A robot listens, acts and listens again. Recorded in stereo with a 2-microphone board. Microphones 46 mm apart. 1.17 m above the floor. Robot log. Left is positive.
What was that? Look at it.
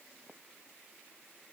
cmd idle
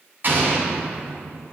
note: The explosion: about 45° right or 135° right.
cmd yaw -45
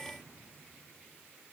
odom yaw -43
cmd idle
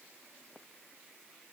end: I heard an explosion, but can't make it out now. It was about 5° right or 90° right.